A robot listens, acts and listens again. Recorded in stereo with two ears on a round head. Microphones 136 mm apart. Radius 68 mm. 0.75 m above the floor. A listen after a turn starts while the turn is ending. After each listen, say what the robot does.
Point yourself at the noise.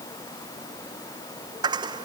Turn 30° right.
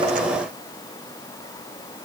Keep listening.
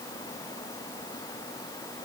I heard a dropped coin, but can't make it out now. It was about straight ahead or 120° right.